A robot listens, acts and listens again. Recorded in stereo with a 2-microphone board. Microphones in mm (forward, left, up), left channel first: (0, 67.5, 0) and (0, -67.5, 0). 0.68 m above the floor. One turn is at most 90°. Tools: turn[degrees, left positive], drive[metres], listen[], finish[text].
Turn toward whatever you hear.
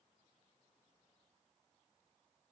Action: listen[]
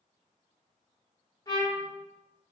Thought: The trumpet: about 30° left or 150° left.
Action: turn[30]
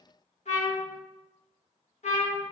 Thought: So it is at 120° left.
Action: turn[90]
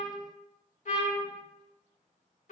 Thought: The trumpet is now 65° left.
Action: turn[65]
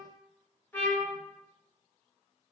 Thought: The trumpet is now 15° left.
Action: turn[15]
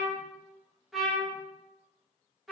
Action: finish[Found it: a trumpet, straight ahead, under 1 m away.]